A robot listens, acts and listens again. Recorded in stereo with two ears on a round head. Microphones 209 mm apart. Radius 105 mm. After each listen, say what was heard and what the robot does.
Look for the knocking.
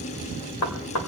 Turn 90° left.
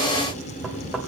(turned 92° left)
Keep listening.
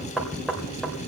Found it: knocking, straight ahead.